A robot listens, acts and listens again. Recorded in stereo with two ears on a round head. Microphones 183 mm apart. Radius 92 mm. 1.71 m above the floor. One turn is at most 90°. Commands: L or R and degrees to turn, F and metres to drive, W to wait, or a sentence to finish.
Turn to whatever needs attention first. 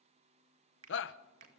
L65
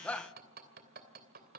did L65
Found it: a shout, straight ahead.